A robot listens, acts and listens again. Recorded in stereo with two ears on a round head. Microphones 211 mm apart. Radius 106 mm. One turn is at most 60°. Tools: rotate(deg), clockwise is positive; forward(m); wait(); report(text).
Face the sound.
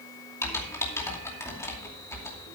rotate(-30)
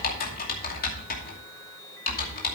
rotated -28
rotate(-60)
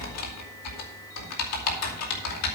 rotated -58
rotate(-60)
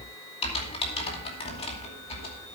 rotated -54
rotate(-25)
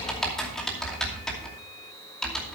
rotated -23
report("Found it: typing on a keyboard, straight ahead.")